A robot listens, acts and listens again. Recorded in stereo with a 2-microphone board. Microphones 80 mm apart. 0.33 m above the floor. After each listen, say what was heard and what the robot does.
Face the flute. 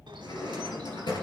Keep listening.
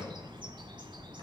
Keep listening.
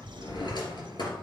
I can't make out a flute to turn to.